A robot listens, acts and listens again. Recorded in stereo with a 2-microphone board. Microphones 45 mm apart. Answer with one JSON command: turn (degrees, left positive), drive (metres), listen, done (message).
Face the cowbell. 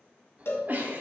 {"turn": 60}
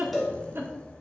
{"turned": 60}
{"done": "Facing the cowbell, 1 to 2 m away."}